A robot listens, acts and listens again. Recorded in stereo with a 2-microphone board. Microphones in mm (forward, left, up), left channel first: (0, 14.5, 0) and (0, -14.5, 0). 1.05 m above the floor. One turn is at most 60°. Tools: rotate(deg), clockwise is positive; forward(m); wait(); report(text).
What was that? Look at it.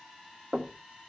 rotate(35)
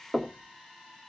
report("Facing the knocking, 1 to 2 m away.")